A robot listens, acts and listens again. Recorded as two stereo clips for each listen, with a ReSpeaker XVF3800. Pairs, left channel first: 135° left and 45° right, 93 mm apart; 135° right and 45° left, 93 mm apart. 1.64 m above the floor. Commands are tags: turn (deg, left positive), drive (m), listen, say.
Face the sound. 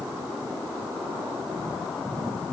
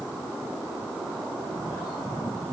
<listen/>
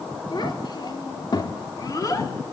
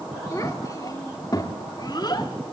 <turn deg="-175"/>
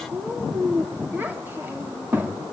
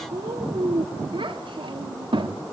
<turn deg="25"/>
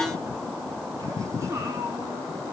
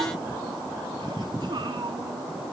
<turn deg="10"/>
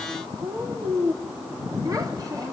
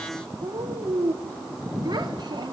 <say>Facing the child speaking, 2 to 4 m away.</say>